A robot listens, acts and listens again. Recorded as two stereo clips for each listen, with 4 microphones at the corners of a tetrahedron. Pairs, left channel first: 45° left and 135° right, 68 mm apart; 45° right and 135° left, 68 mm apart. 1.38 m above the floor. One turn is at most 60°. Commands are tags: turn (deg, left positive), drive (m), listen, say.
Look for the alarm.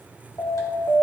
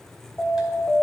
<say>Found it: an alarm, straight ahead, 1 to 2 m away.</say>